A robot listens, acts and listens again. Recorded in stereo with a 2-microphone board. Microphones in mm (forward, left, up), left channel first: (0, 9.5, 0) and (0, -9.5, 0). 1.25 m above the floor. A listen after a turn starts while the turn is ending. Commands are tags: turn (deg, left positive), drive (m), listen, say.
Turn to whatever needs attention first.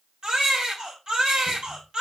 <turn deg="-45"/>
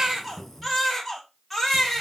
<say>Facing the baby crying, 2 to 4 m away.</say>